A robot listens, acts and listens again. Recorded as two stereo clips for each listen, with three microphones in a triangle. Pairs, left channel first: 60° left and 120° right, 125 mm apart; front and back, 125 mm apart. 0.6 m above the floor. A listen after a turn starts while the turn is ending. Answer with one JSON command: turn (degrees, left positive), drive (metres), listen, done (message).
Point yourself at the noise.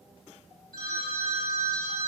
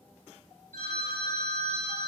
{"turn": 15}
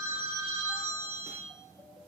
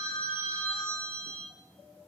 {"done": "Facing the phone ringing."}